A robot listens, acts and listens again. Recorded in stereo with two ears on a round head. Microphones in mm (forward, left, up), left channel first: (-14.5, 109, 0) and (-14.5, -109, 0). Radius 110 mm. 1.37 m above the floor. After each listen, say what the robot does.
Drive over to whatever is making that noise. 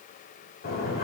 Turn 40° left.
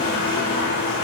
Turn 100° left.
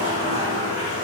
Turn 25° right.
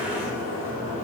Turn 15° right.
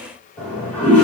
Drive 1.0 m forward.
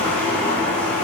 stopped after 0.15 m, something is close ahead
Something is in my way. I am facing the toilet flushing but have not reached it.